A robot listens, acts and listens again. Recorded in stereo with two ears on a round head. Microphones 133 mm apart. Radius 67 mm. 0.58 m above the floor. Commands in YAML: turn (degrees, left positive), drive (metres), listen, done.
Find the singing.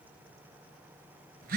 listen: true
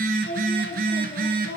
turn: 90
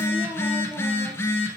listen: true
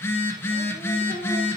listen: true
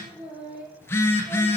done: "Found it: singing, straight ahead, over 4 m away."